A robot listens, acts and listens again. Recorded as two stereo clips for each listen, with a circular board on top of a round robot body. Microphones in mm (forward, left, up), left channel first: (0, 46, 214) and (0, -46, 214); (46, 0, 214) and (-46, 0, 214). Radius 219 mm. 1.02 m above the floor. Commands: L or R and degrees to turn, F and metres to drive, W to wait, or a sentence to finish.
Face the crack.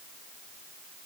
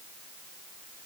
W
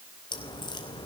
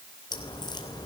L50
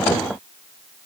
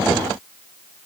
Facing where the crack came from. I can't hear it now.